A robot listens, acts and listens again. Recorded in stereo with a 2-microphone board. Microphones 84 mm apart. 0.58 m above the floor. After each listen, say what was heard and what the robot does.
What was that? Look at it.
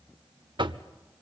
The knocking: about 70° right or 110° right. Turn 70° right.
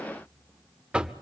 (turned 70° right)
So it is at 10° right. Turn 10° right.
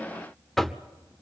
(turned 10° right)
Found it: knocking, straight ahead.